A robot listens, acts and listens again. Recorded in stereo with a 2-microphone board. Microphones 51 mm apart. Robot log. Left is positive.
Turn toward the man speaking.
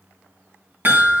cmd idle
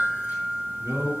note: The man speaking: about 65° right or 115° right.
cmd yaw -65
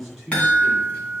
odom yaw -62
end: Facing the man speaking, over 4 m away.